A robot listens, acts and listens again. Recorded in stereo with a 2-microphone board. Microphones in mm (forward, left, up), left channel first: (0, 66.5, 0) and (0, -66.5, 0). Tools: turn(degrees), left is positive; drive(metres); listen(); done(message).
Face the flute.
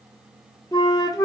turn(degrees=30)
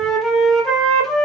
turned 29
done("Found it: a flute, straight ahead, 1 to 2 m away.")